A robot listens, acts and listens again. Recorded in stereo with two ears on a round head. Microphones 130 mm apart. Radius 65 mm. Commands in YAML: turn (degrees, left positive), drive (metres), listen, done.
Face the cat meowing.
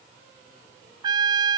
listen: true
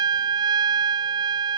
listen: true
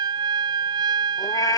turn: 25
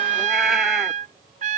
listen: true
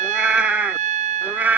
turn: -10
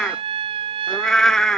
done: "Found it: a cat meowing, straight ahead."